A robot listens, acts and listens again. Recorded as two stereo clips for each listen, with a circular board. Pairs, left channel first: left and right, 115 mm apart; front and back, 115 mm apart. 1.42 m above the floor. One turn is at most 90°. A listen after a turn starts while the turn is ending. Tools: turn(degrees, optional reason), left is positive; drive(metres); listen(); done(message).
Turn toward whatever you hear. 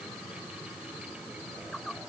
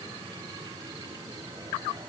listen()
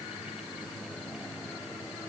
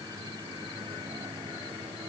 listen()
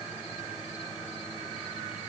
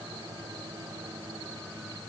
done("I can't make out anything.")